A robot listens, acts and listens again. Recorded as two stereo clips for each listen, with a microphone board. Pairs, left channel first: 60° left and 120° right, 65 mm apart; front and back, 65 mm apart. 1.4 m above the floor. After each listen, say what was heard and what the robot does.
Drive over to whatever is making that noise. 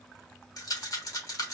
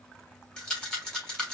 The rattle: 80° left. Turn 80° left.
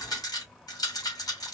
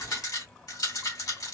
The rattle is now 30° left. Turn 30° left.
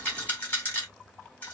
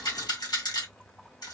Drive 1.0 m forward.
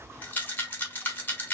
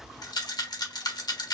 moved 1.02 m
Drive 1.0 m forward.
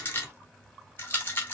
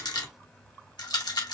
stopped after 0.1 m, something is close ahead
Arrived at the rattle, straight ahead.